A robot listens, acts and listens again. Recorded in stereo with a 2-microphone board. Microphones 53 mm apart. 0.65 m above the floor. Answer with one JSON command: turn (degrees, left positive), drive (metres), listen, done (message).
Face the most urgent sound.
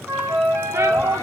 {"turn": -70}
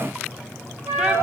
{"listen": true}
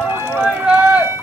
{"turn": -15}
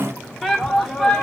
{"done": "Found it: a shout, straight ahead."}